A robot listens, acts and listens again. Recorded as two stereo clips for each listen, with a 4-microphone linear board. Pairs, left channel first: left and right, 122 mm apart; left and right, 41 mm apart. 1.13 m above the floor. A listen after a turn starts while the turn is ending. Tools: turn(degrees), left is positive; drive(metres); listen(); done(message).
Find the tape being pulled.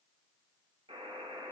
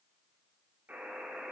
listen()
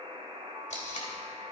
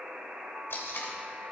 turn(degrees=75)
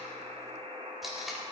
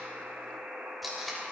done("Found it: tape being pulled, straight ahead, 2 to 4 m away.")